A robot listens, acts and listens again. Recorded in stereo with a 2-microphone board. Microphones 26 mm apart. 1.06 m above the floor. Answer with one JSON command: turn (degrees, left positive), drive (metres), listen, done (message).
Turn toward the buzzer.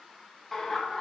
{"listen": true}
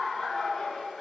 {"listen": true}
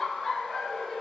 {"done": "I can't make out a buzzer to turn to."}